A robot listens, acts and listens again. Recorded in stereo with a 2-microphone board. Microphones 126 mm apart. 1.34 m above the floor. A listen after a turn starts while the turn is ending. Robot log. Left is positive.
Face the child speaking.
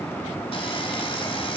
cmd idle
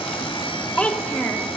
cmd yaw +30
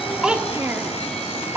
note: So it is at 20° right.
cmd yaw -20
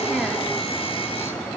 cmd idle
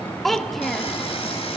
end: Facing the child speaking, 1 to 2 m away.